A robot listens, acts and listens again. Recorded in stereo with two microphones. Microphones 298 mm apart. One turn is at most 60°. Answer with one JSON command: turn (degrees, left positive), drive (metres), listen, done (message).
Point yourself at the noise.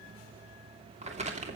{"turn": -20}
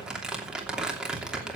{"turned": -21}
{"done": "Facing the crumpling."}